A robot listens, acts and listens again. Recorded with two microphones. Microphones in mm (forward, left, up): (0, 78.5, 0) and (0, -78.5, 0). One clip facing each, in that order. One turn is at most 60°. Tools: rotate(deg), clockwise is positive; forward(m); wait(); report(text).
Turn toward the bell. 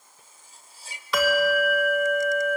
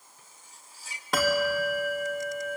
rotate(50)
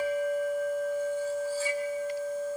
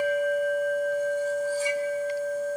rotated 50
rotate(60)
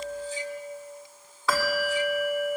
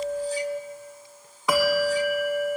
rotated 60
rotate(15)
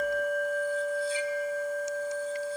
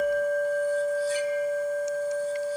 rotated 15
report("Found it: a bell, straight ahead.")